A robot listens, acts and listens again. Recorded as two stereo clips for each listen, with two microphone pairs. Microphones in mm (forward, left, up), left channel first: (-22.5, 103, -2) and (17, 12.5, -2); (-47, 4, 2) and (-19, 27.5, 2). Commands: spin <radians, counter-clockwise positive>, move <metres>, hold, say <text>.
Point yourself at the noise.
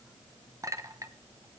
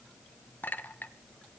spin -2.09
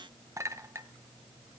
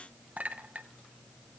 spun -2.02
say Facing the clink.